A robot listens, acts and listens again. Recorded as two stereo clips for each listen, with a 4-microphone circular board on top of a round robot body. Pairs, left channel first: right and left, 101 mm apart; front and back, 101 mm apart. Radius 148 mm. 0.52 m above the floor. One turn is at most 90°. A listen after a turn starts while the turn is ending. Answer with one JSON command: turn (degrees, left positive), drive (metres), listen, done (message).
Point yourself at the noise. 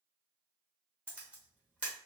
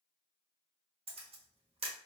{"turn": 90}
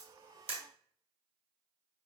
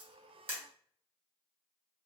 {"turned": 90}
{"turn": 90}
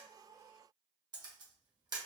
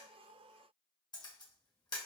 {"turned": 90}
{"turn": 45}
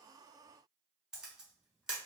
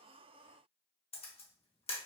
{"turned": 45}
{"turn": 10}
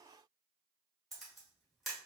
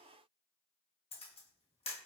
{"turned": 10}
{"done": "Found it: a camera shutter, straight ahead, 1 to 2 m away."}